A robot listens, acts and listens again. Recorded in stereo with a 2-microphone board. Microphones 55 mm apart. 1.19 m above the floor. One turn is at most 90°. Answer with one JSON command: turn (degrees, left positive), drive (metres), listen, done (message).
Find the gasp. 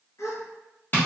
{"turn": 60}
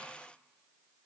{"listen": true}
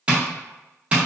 {"done": "I heard a gasp, but can't make it out now. It was about straight ahead or 60° left."}